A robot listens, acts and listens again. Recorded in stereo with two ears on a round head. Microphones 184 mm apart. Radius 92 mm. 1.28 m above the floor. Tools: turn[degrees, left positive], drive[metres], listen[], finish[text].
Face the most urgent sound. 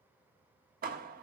Action: listen[]
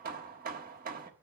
Action: listen[]
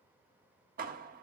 Action: finish[I can't make out anything urgent to turn to.]